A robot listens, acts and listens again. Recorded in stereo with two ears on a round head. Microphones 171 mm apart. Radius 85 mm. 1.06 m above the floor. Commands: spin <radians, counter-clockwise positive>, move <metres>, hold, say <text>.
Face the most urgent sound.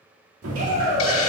spin -0.70
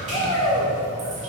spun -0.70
say Found it: a shout, straight ahead, 2 to 4 m away.